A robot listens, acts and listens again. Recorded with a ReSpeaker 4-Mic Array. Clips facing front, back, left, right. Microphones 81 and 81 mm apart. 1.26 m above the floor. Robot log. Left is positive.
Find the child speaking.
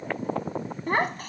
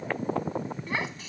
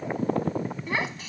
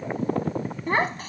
note: The child speaking: 40° right.
cmd yaw -40
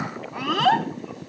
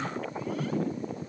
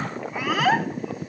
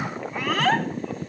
end: Facing the child speaking.